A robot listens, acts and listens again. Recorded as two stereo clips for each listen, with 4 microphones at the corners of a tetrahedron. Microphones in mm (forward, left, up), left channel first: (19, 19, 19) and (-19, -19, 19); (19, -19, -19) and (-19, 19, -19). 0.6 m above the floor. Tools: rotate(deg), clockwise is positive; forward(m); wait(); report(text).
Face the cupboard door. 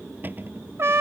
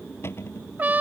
rotate(85)
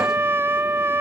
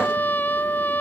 wait()
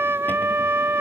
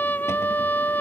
wait()
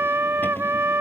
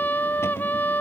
report("I heard a cupboard door from this way, but can't make it out now.")